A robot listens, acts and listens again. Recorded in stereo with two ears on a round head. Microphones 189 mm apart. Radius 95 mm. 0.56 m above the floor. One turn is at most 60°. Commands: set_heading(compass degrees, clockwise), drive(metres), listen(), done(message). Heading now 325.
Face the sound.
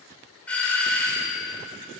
set_heading(295)
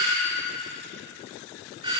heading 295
set_heading(320)
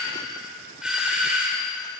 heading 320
done("Facing the doorbell, 2 to 4 m away.")